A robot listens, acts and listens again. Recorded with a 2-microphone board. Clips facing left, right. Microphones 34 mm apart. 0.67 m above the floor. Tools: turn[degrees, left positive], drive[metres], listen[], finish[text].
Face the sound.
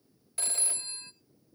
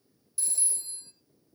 Thought: The phone ringing: about 55° left or 125° left.
Action: turn[55]
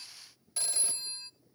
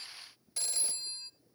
Thought: So it is at 10° left.
Action: turn[10]
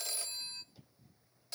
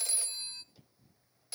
Action: finish[Facing the phone ringing, under 1 m away.]